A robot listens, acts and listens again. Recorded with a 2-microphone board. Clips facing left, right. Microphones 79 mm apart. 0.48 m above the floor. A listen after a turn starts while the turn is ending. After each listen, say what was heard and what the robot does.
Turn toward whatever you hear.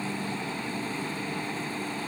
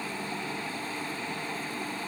Keep listening.
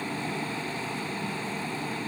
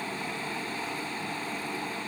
Keep listening.
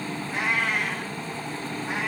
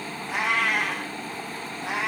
Turn 90° right.
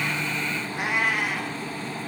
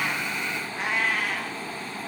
So it is at 10° left. Turn 10° left.
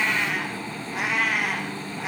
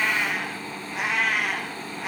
Facing the cat meowing.